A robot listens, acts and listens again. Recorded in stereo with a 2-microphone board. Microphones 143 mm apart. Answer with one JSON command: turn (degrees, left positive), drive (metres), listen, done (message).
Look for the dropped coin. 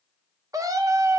{"listen": true}
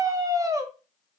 {"listen": true}
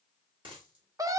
{"turn": -35}
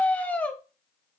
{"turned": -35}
{"listen": true}
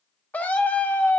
{"done": "I heard a dropped coin, but can't make it out now. It was about straight ahead or 110° right."}